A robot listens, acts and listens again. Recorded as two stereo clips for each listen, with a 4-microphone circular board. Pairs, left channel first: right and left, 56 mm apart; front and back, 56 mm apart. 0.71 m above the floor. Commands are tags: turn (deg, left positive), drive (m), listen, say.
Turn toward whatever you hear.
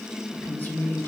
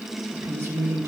<turn deg="-145"/>
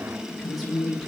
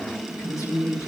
<say>Facing the woman speaking.</say>